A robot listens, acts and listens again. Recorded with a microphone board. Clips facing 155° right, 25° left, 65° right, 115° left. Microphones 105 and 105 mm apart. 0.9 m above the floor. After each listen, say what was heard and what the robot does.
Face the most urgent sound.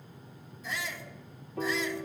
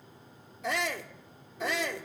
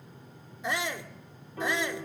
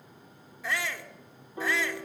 Facing the shout.